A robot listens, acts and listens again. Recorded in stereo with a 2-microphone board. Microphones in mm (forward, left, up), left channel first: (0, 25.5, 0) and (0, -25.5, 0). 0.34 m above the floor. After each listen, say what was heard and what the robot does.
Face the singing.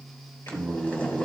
Turn 90° left.
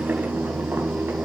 Facing the singing.